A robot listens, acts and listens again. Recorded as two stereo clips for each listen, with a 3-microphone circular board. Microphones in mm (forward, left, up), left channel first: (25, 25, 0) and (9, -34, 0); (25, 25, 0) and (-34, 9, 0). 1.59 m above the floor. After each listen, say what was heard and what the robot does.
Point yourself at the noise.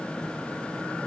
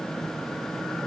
Keep listening.
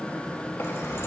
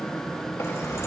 The keys jangling: 45° left. Turn 45° left.
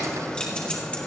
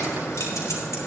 Keep listening.
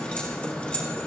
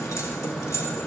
The keys jangling is now 10° left. Turn 10° left.
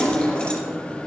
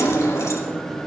The keys jangling is now 10° left. Turn 10° left.
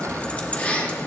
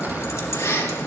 The keys jangling is now 20° left. Turn 20° left.
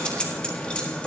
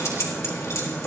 The keys jangling is now 10° left. Turn 10° left.
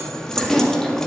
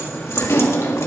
Facing the keys jangling.